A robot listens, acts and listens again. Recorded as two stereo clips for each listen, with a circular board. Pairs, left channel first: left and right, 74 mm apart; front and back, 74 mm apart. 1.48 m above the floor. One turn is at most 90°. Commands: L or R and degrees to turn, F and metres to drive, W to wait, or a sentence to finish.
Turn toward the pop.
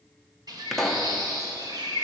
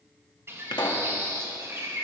Found it: a pop, straight ahead, 1 to 2 m away.